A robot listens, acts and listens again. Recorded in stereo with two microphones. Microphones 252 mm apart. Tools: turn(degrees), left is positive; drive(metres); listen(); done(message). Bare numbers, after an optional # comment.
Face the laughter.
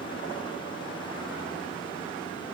listen()
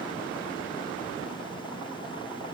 listen()
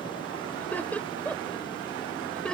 turn(30)
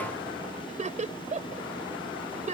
# So it is at 25° right.
turn(-25)
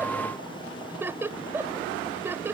# The laughter is now 10° right.
turn(-10)
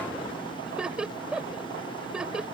done("Found it: laughter, straight ahead.")